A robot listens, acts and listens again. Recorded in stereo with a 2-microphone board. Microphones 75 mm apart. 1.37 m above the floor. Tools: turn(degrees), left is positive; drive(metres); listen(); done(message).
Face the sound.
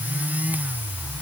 listen()
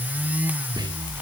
turn(degrees=-90)
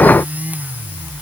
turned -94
listen()
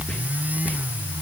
turn(degrees=15)
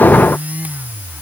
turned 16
listen()
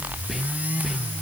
done("Found it: whispering, straight ahead.")